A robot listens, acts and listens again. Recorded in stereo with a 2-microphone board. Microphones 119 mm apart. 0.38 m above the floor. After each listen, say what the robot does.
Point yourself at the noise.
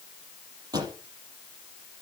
Turn 35° right.
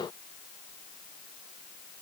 Keep listening.
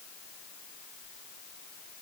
I heard a pop, but can't make it out now. It was about straight ahead or 110° right.